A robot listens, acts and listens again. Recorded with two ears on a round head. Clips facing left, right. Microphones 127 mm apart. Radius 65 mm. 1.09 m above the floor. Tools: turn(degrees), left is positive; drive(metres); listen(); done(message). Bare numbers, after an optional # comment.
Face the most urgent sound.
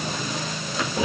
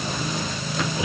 listen()
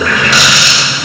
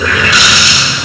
listen()
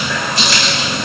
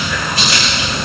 done("I can't make out anything urgent to turn to.")